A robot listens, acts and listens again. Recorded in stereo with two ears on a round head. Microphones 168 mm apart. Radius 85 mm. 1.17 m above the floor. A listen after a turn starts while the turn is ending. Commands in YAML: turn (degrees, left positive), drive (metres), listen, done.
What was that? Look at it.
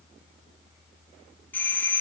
turn: 30
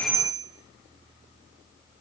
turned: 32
turn: -25
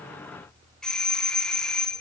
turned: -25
done: "Facing the doorbell."